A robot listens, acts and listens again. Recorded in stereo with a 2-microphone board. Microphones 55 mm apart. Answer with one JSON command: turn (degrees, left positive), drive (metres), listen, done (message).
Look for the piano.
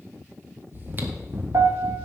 {"turn": -60}
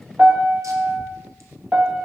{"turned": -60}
{"turn": -30}
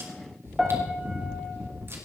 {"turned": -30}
{"done": "Found it: a piano, straight ahead."}